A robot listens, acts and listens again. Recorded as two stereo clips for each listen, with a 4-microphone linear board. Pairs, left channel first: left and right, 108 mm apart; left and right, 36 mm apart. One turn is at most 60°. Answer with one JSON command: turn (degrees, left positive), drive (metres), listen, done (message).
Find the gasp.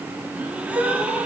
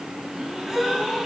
{"turn": -30}
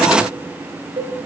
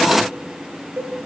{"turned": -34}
{"listen": true}
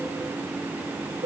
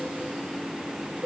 {"done": "I heard a gasp, but can't make it out now. It was about 20° left or 135° right."}